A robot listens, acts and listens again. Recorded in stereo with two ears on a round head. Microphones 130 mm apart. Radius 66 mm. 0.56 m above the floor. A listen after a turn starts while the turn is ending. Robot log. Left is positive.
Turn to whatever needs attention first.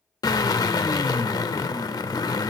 cmd idle
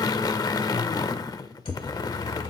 note: The siren: about 40° left or 140° left.
cmd yaw +40
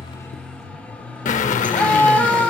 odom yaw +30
note: So it is at 10° left.
cmd yaw +10
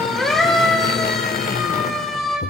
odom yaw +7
end: Found it: a siren, straight ahead.